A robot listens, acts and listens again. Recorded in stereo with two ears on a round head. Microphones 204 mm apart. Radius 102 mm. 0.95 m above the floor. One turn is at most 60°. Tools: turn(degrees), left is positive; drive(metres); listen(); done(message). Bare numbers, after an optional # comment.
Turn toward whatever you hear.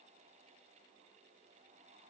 listen()
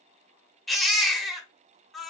turn(30)
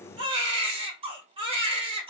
# So it is at 30° right.
turn(-30)
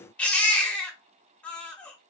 done("Facing the baby crying.")